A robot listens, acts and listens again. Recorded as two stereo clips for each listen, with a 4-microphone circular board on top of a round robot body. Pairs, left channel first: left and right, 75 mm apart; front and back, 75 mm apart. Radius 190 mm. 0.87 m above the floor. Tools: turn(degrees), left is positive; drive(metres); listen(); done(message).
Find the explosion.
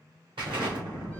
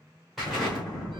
turn(degrees=-90)
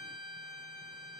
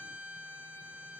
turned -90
done("I heard an explosion from this way, but can't make it out now.")